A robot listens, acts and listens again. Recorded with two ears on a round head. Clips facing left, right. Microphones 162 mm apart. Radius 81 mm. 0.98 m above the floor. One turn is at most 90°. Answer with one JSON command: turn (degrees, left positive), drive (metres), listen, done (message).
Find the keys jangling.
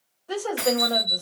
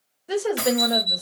{"turn": -75}
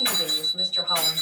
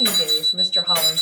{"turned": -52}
{"listen": true}
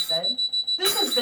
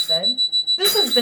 {"listen": true}
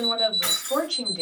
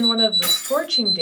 {"turn": -40}
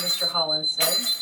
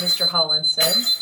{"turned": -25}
{"turn": -15}
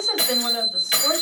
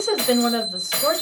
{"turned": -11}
{"turn": 20}
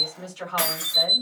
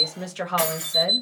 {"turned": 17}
{"done": "Found it: keys jangling, straight ahead, 1 to 2 m away."}